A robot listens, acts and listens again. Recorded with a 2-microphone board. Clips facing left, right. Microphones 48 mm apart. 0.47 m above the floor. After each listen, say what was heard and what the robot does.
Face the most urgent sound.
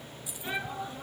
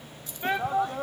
The shout: about 65° right or 115° right. Turn 65° right.
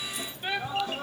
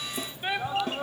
So it is at 15° right. Turn 15° right.
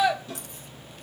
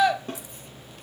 Facing the shout.